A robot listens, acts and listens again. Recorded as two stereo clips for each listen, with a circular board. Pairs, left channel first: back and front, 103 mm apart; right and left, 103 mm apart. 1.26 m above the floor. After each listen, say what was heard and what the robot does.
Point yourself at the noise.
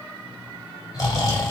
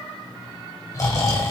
The snoring: 145° right. Turn 145° right.
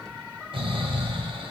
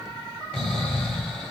The snoring is now 15° right. Turn 15° right.
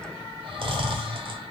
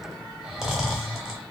Facing the snoring, 1 to 2 m away.